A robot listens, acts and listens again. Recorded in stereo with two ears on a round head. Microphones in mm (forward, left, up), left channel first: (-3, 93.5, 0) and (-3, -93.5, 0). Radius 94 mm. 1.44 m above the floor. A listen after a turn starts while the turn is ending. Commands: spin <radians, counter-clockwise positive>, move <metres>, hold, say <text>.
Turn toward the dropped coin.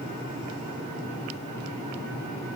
hold
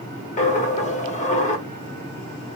spin 0.61
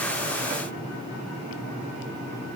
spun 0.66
hold
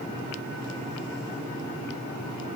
say I heard a dropped coin, but can't make it out now. It was about 5° right or 105° left.